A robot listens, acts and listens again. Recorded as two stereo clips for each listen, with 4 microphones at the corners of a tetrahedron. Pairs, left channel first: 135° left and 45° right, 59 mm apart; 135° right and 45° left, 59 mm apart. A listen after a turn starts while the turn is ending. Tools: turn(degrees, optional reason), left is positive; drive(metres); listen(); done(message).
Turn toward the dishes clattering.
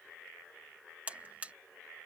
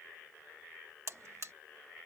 listen()
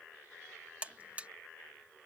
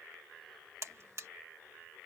listen()
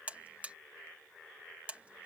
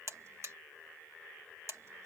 done("I can't make out dishes clattering, only a buzzer.")